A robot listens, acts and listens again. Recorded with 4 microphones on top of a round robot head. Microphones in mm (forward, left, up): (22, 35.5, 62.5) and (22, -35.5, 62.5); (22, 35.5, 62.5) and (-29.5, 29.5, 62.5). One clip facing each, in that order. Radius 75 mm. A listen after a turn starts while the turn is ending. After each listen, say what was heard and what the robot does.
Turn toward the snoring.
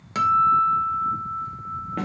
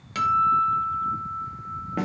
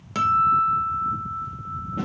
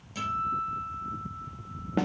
Keep listening.
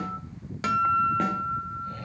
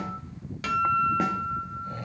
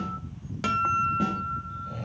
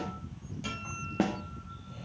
The snoring: 20° right. Turn 20° right.
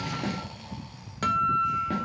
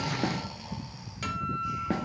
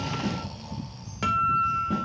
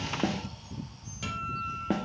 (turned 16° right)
Keep listening.
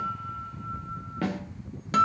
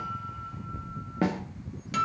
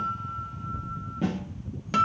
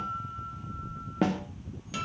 Found it: snoring, straight ahead.